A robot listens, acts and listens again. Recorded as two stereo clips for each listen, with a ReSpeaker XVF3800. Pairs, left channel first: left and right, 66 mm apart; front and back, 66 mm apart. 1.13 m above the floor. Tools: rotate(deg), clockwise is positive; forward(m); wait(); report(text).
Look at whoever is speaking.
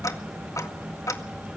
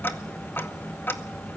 wait()
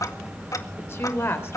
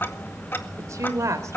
rotate(-140)
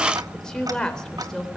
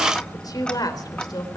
rotate(-10)
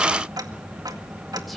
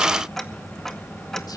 wait()
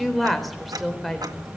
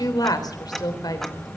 report("Facing the woman speaking.")